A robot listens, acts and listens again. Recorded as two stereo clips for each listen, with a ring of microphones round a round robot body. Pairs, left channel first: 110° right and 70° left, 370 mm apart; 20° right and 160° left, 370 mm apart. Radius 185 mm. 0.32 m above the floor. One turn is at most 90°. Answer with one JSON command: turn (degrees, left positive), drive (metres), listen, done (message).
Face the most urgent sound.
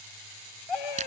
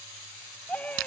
{"turn": -90}
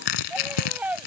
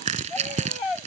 {"turn": -20}
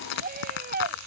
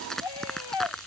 {"done": "Found it: a scream, straight ahead."}